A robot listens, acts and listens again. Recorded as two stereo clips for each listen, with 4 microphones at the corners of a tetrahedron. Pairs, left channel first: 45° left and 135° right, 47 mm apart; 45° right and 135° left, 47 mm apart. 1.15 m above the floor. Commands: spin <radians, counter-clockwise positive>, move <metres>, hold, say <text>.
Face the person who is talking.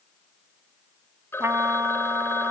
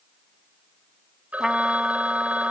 hold
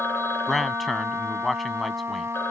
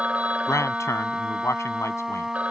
spin -0.79
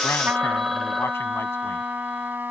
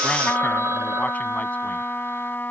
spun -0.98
spin 0.17
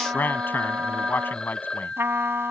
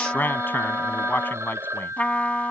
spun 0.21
say Found it: a man speaking, straight ahead.